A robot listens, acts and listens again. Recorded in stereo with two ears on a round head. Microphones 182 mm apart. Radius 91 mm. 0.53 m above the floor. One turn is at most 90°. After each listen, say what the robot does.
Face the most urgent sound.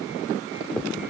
Keep listening.
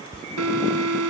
Turn 90° right.
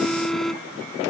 Found it: an alarm, straight ahead.